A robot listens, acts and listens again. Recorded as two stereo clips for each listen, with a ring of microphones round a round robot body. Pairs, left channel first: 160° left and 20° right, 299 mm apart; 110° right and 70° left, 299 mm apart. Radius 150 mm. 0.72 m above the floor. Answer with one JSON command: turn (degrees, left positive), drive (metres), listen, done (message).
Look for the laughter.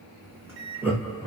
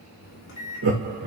{"turn": 60}
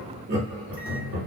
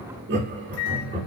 {"turn": 15}
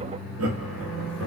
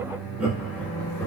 {"turn": -35}
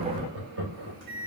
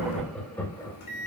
{"turn": -40}
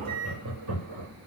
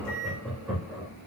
{"turn": -25}
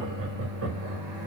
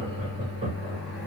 {"done": "Facing the laughter, 1 to 2 m away."}